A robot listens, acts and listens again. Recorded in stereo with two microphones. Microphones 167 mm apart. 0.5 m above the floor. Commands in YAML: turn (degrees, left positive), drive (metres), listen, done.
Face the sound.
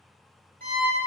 turn: -60
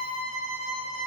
turn: -25
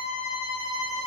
turn: 30
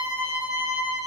done: "Found it: a violin, straight ahead."